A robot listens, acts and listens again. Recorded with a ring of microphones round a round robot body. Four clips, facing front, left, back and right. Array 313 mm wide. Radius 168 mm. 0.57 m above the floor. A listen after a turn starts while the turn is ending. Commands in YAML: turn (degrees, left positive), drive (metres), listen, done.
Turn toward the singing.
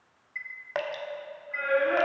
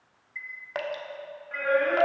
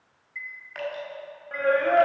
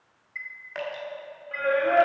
turn: -160
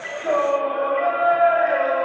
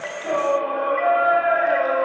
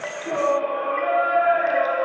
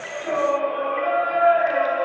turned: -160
turn: 40
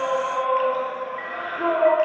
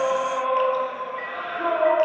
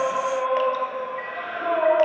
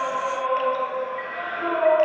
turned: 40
turn: 20
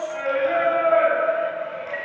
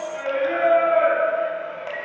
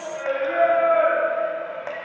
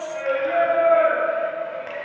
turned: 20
done: "Found it: singing, straight ahead, 2 to 4 m away."